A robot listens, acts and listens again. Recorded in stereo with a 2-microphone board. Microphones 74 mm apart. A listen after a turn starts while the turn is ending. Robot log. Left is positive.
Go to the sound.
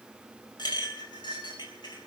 cmd yaw +90
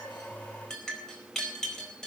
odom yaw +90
note: So it is at 10° left.
cmd yaw +10
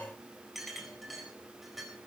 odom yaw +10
cmd fwd 1.0
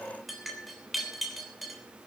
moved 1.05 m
cmd fwd 1.0
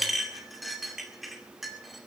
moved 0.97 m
cmd fwd 1.0
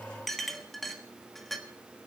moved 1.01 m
cmd fwd 1.0
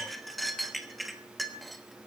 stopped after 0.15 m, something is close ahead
end: Arrived at the clink, straight ahead.